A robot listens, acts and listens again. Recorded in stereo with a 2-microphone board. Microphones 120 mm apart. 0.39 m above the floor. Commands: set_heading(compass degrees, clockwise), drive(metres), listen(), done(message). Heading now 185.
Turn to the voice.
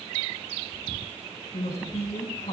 set_heading(115)
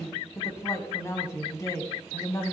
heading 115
set_heading(85)
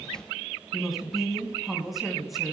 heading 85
done("Found it: a woman speaking, straight ahead, 2 to 4 m away.")